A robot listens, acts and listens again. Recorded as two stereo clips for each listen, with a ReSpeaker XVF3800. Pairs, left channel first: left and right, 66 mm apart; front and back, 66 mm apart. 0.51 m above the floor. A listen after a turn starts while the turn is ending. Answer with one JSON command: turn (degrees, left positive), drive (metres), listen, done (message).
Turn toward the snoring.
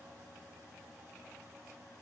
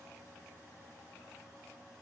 {"listen": true}
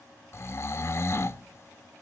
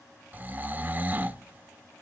{"turn": 125}
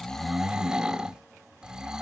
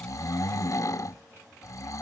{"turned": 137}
{"turn": -15}
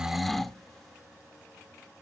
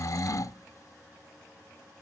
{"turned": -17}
{"done": "Found it: snoring, straight ahead, under 1 m away."}